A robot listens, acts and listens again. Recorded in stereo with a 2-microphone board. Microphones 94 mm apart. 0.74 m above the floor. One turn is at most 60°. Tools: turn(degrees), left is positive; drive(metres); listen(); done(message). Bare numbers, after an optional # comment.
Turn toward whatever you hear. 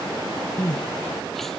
turn(30)
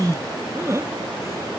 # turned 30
# So it is at 30° right.
turn(-30)
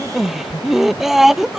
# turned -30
done("Facing the crying.")